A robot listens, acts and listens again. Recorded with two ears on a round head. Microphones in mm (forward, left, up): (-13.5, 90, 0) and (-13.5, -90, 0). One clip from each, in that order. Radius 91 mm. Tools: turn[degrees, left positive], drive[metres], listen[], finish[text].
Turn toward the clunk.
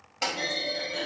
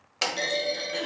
Thought: The clunk: about 65° right or 115° right.
Action: turn[-65]
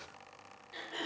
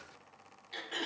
Action: listen[]
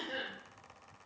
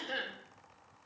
Action: finish[I heard a clunk, but can't make it out now. It was about straight ahead or 50° right.]